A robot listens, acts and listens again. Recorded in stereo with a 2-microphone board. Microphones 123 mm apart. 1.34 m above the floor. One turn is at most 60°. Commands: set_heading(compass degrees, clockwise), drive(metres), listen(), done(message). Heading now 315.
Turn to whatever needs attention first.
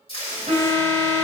set_heading(15)
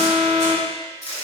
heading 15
set_heading(30)
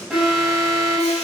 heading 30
done("Found it: an alarm, straight ahead.")